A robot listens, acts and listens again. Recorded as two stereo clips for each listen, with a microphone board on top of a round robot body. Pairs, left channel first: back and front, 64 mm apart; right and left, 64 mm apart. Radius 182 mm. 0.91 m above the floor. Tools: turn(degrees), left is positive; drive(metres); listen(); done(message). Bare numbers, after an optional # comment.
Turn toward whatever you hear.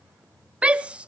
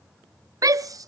# The shout: 75° left.
turn(75)
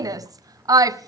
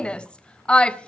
# The shout is now 15° right.
turn(-15)
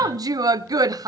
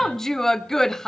done("Facing the shout, under 1 m away.")